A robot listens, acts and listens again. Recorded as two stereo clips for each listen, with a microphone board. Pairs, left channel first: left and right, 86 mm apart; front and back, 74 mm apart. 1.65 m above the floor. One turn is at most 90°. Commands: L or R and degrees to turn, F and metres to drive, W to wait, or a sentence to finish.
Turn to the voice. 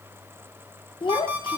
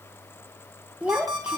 L90
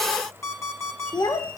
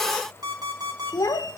L40
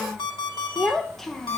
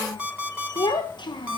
Found it: a child speaking, straight ahead, 1 to 2 m away.